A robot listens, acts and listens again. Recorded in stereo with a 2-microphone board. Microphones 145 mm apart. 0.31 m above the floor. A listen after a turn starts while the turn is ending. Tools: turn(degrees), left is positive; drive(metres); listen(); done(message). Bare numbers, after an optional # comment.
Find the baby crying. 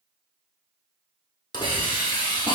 listen()
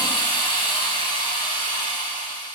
listen()
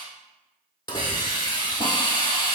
done("I can't make out a baby crying, only a hiss.")